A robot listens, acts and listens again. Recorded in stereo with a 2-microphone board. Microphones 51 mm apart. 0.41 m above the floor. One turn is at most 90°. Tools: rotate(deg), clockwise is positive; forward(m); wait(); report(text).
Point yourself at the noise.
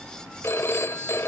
rotate(-55)
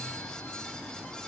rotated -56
wait()
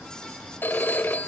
rotate(-50)
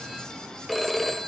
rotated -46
report("Facing the phone ringing, 1 to 2 m away.")